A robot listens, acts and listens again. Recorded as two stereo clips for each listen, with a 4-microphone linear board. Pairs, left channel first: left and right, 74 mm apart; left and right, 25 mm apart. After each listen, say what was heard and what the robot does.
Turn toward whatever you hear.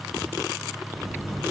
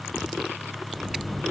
The buzzer: about 40° left or 140° left. Turn 40° left.
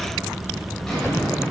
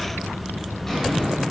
Facing the buzzer, 2 to 4 m away.